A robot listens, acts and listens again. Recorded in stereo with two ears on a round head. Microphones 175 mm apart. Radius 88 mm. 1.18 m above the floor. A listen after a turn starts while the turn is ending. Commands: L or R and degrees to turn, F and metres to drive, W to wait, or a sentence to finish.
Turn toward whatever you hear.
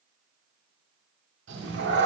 R60
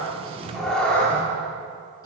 L10
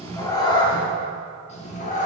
L40
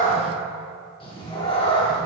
L25
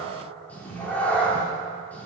L10
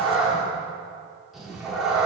Found it: a cat meowing, straight ahead.